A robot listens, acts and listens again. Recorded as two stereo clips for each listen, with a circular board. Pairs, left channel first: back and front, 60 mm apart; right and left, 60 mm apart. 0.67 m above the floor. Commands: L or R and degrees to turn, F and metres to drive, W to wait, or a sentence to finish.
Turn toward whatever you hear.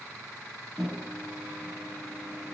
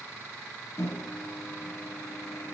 R75
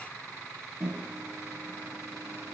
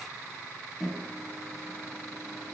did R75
Facing the microwave.